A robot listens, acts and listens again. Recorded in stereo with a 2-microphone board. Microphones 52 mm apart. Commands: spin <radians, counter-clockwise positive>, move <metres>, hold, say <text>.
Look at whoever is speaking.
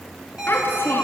spin 0.70
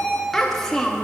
say Found it: a child speaking, straight ahead.